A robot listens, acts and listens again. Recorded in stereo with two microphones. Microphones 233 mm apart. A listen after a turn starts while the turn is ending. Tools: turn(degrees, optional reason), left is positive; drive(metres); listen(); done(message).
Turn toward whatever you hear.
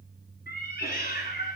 turn(degrees=45, reason="The cat meowing: about 45° left or 135° left.")
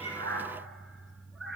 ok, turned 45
done("Found it: a cat meowing, straight ahead.")